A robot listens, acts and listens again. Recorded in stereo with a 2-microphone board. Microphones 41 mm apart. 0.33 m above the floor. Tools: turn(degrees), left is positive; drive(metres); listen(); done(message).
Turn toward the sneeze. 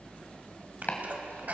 turn(degrees=-45)
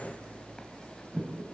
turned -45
listen()
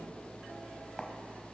done("I heard a sneeze, but can't make it out now. It was about straight ahead or 90° right.")